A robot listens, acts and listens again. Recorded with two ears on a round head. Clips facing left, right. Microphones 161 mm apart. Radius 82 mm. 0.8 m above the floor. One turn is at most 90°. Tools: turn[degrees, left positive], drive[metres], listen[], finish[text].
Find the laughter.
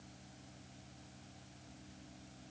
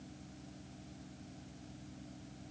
Action: listen[]
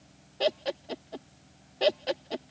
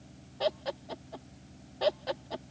Thought: The laughter: about 30° left or 150° left.
Action: turn[30]
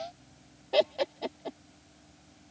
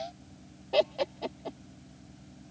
Action: finish[Facing the laughter.]